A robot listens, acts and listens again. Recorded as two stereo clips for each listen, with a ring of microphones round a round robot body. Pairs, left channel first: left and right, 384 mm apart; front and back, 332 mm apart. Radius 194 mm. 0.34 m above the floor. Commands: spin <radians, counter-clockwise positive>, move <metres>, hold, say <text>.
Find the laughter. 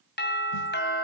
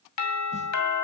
hold
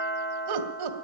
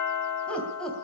spin -1.57
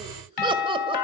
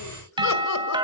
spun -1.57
hold
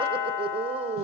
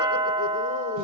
spin -0.52
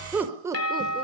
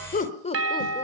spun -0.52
spin -0.44
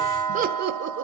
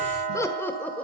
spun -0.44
spin -1.48
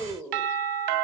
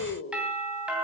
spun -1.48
say Found it: laughter, straight ahead, 1 to 2 m away.